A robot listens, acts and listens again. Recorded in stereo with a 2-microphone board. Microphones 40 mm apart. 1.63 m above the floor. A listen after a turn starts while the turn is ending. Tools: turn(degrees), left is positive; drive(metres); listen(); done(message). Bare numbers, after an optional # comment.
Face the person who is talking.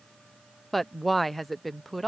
turn(30)
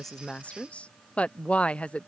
# So it is at 150° left.
turn(150)
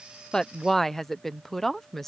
done("Found it: a woman speaking, straight ahead.")